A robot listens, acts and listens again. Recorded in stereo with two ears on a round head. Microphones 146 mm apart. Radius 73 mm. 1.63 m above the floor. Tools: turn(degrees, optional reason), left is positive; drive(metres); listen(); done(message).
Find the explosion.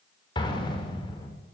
turn(degrees=30, reason="The explosion: about 30° left or 150° left.")
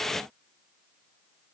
listen()
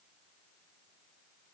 done("I heard an explosion, but can't make it out now. It was about straight ahead or 120° left.")